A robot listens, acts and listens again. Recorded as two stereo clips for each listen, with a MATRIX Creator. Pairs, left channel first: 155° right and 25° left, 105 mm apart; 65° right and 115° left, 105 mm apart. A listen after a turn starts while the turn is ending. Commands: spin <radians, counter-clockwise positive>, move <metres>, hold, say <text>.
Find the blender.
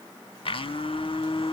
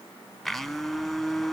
spin -2.71
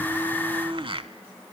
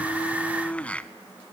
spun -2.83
spin 0.17
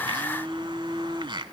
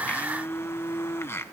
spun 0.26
say Facing the blender.